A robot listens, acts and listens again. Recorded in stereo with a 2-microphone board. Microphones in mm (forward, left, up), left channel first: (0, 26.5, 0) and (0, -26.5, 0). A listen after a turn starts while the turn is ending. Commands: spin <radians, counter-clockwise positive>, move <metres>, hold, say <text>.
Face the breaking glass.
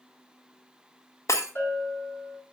spin 1.22
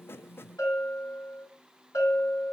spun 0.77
hold
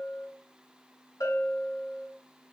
say I heard breaking glass, but can't make it out now. It was about 25° left or 65° left.